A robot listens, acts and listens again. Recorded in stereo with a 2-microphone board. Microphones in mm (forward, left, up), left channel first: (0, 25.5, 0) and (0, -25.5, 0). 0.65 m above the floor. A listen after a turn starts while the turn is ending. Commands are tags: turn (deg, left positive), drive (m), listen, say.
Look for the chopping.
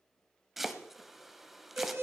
<turn deg="-30"/>
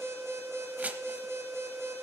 <turn deg="-145"/>
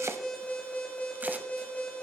<listen/>
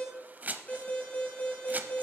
<turn deg="-35"/>
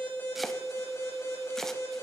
<turn deg="10"/>
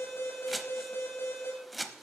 <say>Facing the chopping, under 1 m away.</say>